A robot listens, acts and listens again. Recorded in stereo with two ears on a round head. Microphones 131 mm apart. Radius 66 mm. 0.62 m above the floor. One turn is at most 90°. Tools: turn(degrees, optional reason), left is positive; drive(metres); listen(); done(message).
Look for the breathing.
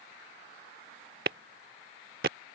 listen()
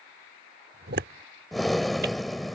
turn(degrees=30)
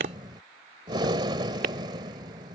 turn(degrees=-30, reason="So it is at 30° right.")
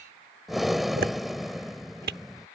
done("Facing the breathing.")